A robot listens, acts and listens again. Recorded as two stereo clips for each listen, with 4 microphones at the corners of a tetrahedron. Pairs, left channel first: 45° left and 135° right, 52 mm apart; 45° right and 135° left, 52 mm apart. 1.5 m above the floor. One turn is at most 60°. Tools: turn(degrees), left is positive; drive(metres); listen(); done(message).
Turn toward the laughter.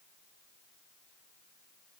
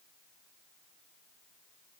listen()
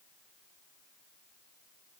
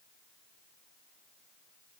listen()
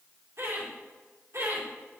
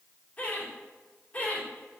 turn(degrees=-60)
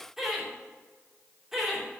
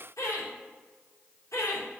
turn(degrees=-50)
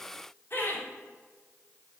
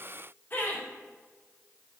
done("Facing the laughter.")